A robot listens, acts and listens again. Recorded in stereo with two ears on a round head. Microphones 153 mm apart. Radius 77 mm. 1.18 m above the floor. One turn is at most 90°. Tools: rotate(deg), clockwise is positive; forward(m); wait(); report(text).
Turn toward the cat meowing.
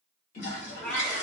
rotate(-30)
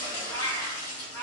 rotate(-30)
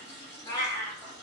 rotate(-15)
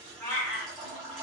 rotate(-30)
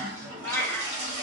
rotate(-15)
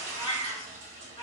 rotate(-90)
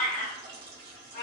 rotate(-55)
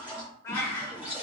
rotate(-20)
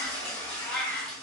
report("Found it: a cat meowing, straight ahead, 1 to 2 m away.")